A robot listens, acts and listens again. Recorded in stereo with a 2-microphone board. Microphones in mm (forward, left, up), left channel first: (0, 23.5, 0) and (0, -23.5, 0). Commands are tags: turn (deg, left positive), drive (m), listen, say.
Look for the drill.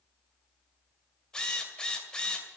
<turn deg="15"/>
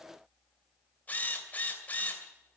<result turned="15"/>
<turn deg="145"/>
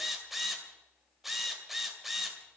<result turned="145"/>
<say>Found it: a drill, straight ahead.</say>